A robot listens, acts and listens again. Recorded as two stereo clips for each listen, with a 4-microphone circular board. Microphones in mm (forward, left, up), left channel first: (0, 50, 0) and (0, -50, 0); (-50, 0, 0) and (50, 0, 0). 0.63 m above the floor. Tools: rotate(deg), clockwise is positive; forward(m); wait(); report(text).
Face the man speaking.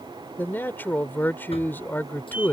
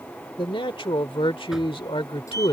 rotate(-160)
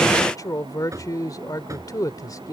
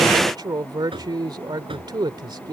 rotate(-40)
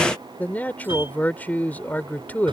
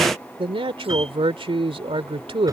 rotate(-15)
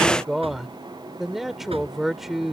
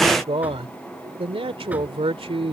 report("Found it: a man speaking, straight ahead.")